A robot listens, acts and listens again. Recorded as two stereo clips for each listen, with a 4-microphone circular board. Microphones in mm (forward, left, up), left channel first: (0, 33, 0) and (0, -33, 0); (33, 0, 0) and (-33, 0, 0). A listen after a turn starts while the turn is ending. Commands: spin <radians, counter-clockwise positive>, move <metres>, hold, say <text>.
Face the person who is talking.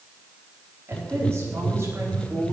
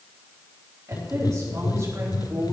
spin -2.44
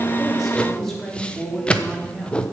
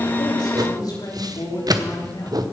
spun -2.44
say Found it: a woman speaking, straight ahead, over 4 m away.